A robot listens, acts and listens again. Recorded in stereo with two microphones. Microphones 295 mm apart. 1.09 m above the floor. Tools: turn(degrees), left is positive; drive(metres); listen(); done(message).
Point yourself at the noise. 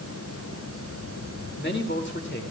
turn(degrees=40)
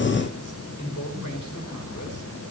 turn(degrees=95)
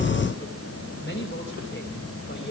turn(degrees=40)
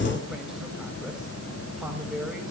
done("Facing the man speaking.")